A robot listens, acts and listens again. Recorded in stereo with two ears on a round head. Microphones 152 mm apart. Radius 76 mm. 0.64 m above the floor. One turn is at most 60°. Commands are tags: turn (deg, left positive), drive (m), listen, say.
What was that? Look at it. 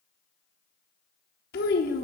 <turn deg="60"/>
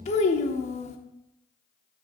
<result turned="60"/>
<turn deg="45"/>
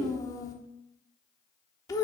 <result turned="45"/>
<turn deg="20"/>
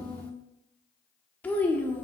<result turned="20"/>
<turn deg="10"/>
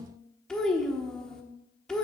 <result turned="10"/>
<say>Facing the child speaking, 1 to 2 m away.</say>